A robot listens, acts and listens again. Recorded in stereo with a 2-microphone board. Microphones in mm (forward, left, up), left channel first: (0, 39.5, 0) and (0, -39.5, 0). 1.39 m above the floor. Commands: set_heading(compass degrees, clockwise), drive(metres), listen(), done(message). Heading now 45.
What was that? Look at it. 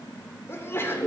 set_heading(15)
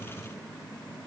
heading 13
listen()
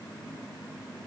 done("I heard a sneeze, but can't make it out now. It was about 5° right or 120° left.")